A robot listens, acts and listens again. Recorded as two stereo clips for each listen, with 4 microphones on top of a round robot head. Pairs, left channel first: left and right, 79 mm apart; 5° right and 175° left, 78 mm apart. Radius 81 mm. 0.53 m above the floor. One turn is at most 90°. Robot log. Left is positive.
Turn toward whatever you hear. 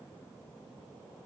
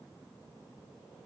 cmd idle
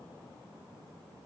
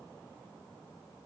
cmd idle
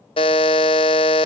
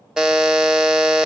note: The buzzer: 95° left.
cmd yaw +90
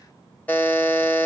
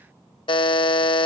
note: The buzzer is now 15° left.
cmd yaw +15
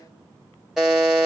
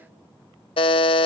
end: Found it: a buzzer, straight ahead, under 1 m away.